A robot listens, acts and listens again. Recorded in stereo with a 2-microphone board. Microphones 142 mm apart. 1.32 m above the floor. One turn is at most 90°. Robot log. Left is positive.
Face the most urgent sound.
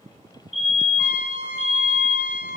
note: The fire alarm: about 45° left or 135° left.
cmd yaw +45
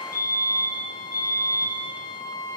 note: So it is at 90° left.
cmd yaw +90
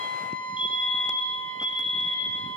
end: Facing the fire alarm, over 4 m away.